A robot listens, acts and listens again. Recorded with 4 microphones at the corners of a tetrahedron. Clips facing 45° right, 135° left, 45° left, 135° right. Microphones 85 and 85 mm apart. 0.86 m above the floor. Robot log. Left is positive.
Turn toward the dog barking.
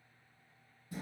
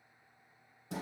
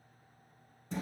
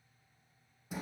cmd idle
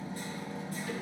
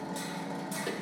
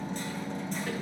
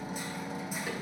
cmd idle
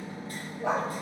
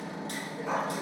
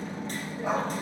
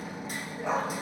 note: The dog barking: 40° right.
cmd yaw -40
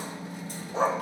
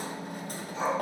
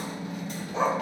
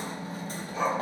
note: The dog barking is now 20° right.
cmd yaw -20
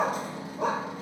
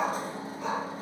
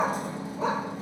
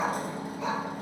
note: The dog barking is now 15° right.
cmd yaw -15
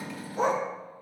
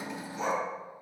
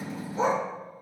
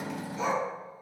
note: The dog barking is now 10° right.
cmd yaw -10
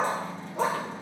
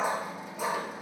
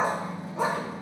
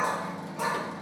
note: The dog barking is now 15° right.
cmd yaw -15
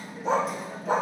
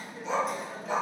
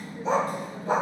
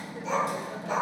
end: Facing the dog barking, 1 to 2 m away.